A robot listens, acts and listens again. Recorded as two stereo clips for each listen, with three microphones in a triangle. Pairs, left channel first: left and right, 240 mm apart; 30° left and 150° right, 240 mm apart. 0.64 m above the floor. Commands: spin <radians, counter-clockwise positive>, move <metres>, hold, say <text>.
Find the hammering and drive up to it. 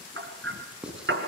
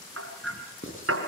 spin -2.18
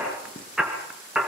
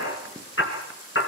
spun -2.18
move 1.0
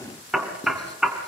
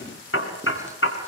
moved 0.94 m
move 1.0
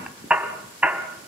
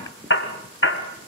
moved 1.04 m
move 1.0
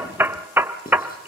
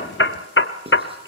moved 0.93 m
spin -0.17
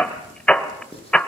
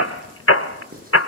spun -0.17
move 1.0
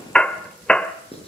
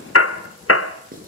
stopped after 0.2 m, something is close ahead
say Arrived at the hammering, straight ahead.